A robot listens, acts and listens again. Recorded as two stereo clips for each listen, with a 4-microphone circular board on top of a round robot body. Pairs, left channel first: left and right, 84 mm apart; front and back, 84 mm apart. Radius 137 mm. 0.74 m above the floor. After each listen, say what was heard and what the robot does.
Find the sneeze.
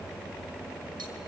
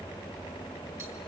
Keep listening.
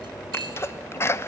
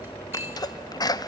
The sneeze: 35° left. Turn 35° left.
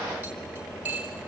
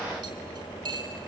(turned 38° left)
I heard a sneeze from this way, but can't make it out now.